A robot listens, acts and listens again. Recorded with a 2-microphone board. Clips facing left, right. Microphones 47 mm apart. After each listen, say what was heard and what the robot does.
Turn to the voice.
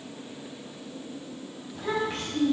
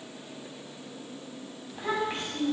The child speaking: about 20° right or 160° right. Turn 20° right.
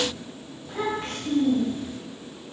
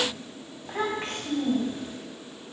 So it is at 140° right. Turn 140° right.
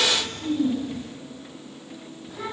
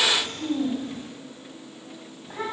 The child speaking is now 50° right. Turn 50° right.
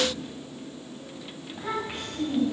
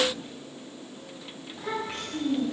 The child speaking is now 15° left. Turn 15° left.
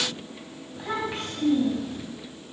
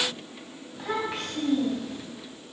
Found it: a child speaking, straight ahead, 2 to 4 m away.